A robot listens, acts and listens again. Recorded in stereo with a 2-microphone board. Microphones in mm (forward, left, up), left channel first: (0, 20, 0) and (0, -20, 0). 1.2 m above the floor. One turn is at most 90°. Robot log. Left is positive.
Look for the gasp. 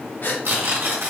note: The gasp: about 50° left or 130° left.
cmd yaw +50
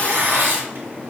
cmd idle
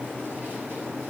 end: I heard a gasp, but can't make it out now. It was about straight ahead or 80° left.